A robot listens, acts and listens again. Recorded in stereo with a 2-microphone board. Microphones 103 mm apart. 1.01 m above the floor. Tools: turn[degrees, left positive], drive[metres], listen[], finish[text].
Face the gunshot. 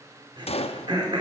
Thought: The gunshot: about 75° left or 105° left.
Action: turn[75]
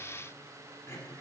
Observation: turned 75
Action: listen[]
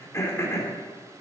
Action: finish[I heard a gunshot, but can't make it out now. It was about straight ahead or 30° left.]